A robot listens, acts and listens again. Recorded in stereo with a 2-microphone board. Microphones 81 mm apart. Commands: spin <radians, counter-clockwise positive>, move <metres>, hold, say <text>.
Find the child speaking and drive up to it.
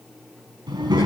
spin -1.05
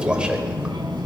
spin -1.05
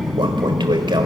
move 1.0
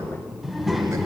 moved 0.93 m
move 1.0
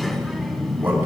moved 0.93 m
move 1.0
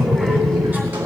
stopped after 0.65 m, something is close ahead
say I am next to the child speaking.